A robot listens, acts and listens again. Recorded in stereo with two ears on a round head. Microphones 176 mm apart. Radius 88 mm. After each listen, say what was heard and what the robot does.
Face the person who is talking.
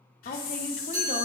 The woman speaking: about 40° left or 140° left. Turn 40° left.
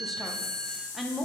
Facing the woman speaking, under 1 m away.